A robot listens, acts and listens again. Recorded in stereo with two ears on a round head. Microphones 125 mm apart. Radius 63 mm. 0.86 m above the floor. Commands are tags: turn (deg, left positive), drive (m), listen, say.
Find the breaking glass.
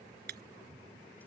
<turn deg="-65"/>
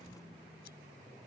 <listen/>
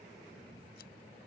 <say>I heard breaking glass, but can't make it out now. It was about straight ahead or 50° right.</say>